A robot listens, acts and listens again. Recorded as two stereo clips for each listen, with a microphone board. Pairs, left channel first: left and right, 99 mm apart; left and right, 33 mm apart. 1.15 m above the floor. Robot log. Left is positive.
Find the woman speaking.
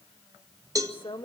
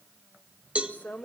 note: The woman speaking: about 55° left or 125° left.
cmd yaw +55
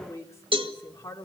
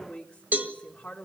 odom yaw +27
note: So it is at 30° left.
cmd yaw +30
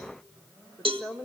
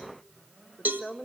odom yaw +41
note: The woman speaking is now 10° right.
cmd yaw -10
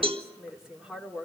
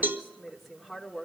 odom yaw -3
end: Facing the woman speaking.